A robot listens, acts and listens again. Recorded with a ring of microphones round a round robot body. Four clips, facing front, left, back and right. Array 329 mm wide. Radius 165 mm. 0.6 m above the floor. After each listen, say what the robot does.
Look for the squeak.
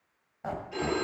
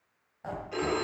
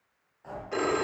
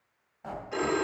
Turn 10° left.
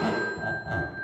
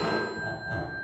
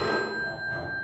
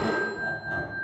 Keep listening.
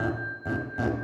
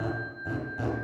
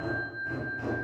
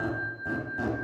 Found it: a squeak, straight ahead, 1 to 2 m away.